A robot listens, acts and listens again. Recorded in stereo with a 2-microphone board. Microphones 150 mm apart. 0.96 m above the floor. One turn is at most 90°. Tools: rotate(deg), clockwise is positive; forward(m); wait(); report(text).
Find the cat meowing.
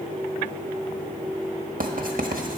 wait()
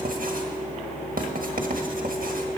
wait()
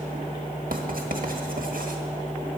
report("I can't make out a cat meowing, only writing.")